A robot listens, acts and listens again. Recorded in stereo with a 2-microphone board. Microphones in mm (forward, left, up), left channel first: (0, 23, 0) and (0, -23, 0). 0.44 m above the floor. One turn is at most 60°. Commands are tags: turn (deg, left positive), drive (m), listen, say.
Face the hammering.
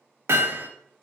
<turn deg="-60"/>
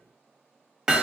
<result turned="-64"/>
<turn deg="-15"/>
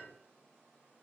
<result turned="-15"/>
<listen/>
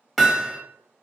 <say>Facing the hammering, under 1 m away.</say>